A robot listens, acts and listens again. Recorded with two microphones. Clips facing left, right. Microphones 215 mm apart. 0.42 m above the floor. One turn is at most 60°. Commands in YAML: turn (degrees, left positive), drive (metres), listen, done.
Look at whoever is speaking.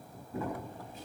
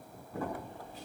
listen: true
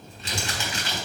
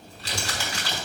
listen: true
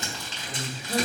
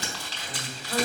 turn: 30
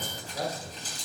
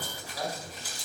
turn: 60
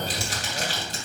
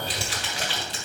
turn: 60
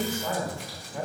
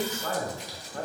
turn: 10
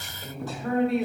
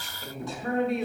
done: "Facing the man speaking."